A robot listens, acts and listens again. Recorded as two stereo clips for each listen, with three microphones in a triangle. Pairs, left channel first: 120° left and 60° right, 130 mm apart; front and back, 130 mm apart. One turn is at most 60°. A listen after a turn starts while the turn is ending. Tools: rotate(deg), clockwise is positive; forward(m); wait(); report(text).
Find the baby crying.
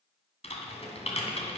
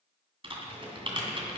wait()
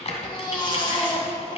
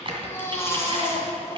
rotate(-60)
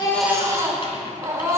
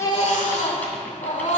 report("Facing the baby crying.")